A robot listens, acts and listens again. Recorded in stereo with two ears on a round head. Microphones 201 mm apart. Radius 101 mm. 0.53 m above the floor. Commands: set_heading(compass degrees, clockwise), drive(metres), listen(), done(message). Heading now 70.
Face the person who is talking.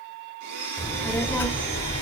set_heading(40)
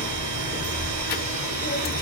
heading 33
set_heading(258)
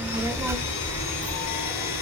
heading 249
set_heading(259)
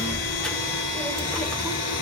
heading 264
done("Found it: a child speaking, straight ahead, under 1 m away.")